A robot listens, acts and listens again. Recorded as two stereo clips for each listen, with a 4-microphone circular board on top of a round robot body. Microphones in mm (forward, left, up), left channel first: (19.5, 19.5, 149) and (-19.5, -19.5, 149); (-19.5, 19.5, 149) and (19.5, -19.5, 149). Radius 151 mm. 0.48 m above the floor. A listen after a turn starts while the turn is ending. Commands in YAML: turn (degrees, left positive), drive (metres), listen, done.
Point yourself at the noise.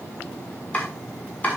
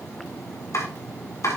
turn: 110
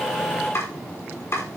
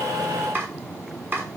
done: "Found it: chopping, straight ahead."